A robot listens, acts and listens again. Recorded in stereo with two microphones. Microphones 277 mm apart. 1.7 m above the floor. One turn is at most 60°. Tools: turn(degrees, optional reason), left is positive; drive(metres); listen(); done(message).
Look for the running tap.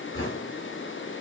listen()
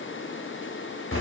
listen()
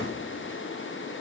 done("I can't make out a running tap, only knocking.")